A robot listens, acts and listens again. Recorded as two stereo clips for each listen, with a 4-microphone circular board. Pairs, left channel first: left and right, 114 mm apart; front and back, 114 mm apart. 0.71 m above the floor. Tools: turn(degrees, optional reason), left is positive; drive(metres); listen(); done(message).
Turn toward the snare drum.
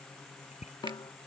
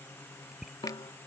turn(degrees=40, reason="The snare drum: 40° left.")
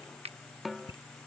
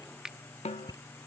done("Facing the snare drum.")